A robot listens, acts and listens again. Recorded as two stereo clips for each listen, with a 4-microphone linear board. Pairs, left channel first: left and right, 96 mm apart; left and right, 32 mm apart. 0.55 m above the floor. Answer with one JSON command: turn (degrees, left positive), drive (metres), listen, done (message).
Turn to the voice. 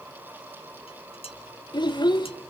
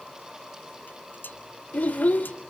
{"turn": 50}
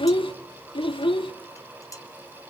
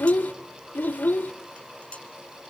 {"turn": 75}
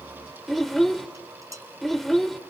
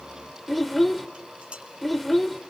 {"done": "Found it: a child speaking, straight ahead, 1 to 2 m away."}